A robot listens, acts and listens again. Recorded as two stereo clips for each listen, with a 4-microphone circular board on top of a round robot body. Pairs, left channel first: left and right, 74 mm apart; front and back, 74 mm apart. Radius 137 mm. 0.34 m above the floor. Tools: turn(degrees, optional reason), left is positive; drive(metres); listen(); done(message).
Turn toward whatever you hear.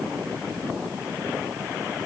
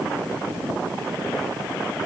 listen()
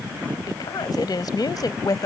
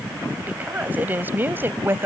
turn(degrees=120, reason="The woman speaking: 120° left.")
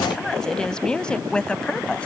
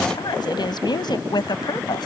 turn(degrees=15, reason="The woman speaking is now 15° left.")
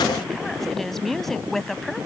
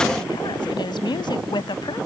done("Facing the woman speaking.")